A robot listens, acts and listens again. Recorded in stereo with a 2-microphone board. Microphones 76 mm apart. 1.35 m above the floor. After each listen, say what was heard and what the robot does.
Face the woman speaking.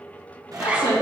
Turn 90° left.
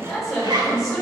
So it is at 10° left. Turn 10° left.
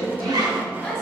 Facing the woman speaking.